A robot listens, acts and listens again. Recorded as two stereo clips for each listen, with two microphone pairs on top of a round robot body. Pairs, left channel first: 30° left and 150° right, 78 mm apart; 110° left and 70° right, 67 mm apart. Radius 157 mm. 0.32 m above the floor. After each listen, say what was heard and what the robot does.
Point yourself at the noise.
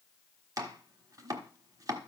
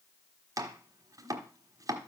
The chopping: 105° right. Turn 105° right.
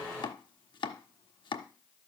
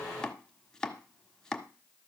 The chopping is now 30° left. Turn 30° left.
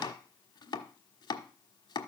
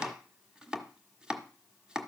The chopping is now 10° left. Turn 10° left.
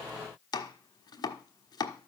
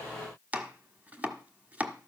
Facing the chopping, 1 to 2 m away.